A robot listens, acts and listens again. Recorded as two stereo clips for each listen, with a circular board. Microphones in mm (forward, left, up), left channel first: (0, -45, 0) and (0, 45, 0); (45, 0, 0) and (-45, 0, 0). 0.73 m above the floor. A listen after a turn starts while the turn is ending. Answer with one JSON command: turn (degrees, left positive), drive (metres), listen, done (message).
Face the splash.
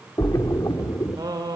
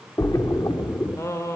{"turn": -45}
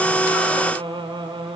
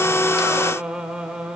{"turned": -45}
{"done": "I heard a splash from this way, but can't make it out now."}